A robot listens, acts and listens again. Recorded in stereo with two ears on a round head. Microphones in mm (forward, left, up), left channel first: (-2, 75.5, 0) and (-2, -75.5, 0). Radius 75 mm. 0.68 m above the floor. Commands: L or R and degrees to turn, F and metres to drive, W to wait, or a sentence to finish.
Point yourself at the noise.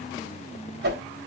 R60
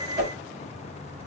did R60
R45
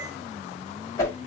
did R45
L20
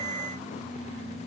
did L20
W
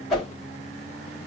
Found it: a whoosh, straight ahead.